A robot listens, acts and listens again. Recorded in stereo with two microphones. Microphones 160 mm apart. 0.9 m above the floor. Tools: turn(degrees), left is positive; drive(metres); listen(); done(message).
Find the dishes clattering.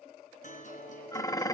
turn(degrees=20)
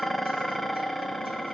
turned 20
done("Facing the dishes clattering.")